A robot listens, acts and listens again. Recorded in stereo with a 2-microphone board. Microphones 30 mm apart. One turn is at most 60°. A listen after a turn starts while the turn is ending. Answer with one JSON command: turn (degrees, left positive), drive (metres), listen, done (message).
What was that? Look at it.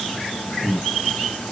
{"turn": 25}
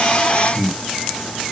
{"turn": 60}
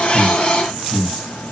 {"turn": 60}
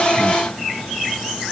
{"turn": 20}
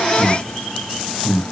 {"turn": 25}
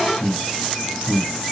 {"turn": 25}
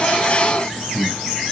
{"turn": -10}
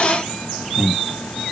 {"done": "Found it: breathing, straight ahead."}